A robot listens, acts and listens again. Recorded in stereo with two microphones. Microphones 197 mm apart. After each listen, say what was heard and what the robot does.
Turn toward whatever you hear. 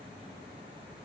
Keep listening.
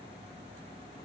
Keep listening.
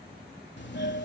The doorbell: about 65° left or 115° left. Turn 65° left.
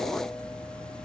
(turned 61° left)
Facing the doorbell.